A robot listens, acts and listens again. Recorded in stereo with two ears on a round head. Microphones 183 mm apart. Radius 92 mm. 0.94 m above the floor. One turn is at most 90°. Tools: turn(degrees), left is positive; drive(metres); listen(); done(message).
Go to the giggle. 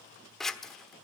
listen()
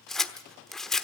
listen()
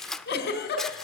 turn(degrees=50)
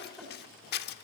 drive(metres=1.0)
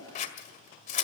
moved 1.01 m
listen()
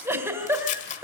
turn(degrees=-15)
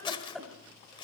drive(metres=1.0)
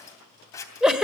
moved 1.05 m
drive(metres=1.0)
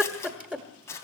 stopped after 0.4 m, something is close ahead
done("I am next to the giggle.")